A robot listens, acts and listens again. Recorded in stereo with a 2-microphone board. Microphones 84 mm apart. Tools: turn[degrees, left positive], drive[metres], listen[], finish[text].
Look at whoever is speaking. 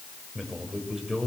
Action: turn[-30]
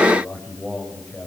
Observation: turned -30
Thought: So it is at 15° left.
Action: turn[15]
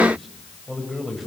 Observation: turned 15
Action: finish[Facing the man speaking.]